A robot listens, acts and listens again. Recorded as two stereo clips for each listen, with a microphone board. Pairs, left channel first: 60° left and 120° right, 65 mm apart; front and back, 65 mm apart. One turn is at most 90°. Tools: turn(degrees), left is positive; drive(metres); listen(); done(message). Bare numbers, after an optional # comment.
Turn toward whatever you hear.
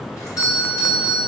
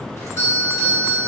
# The doorbell: 40° left.
turn(40)
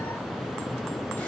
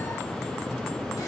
listen()
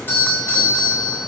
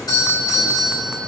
done("Found it: a doorbell, straight ahead.")